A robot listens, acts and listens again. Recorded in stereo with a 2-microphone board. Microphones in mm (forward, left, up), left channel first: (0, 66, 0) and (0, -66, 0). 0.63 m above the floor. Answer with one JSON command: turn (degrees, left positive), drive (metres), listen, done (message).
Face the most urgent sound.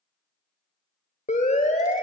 {"turn": 65}
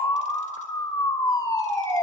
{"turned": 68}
{"turn": 35}
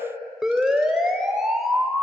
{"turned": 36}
{"done": "Facing the siren."}